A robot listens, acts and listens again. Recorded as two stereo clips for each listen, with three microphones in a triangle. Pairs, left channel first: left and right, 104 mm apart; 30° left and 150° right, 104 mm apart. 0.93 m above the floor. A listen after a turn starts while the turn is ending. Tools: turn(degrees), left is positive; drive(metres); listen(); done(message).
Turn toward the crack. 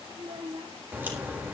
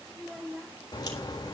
turn(degrees=-20)
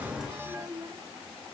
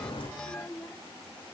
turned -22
done("I heard a crack from this way, but can't make it out now.")